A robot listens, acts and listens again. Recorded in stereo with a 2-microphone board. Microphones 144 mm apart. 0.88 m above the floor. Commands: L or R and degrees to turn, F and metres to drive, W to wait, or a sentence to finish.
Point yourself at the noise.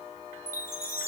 L20
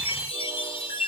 L140
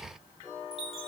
L40
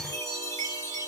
L20
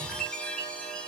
L10
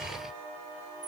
W
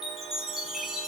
Found it: a chime, straight ahead, under 1 m away.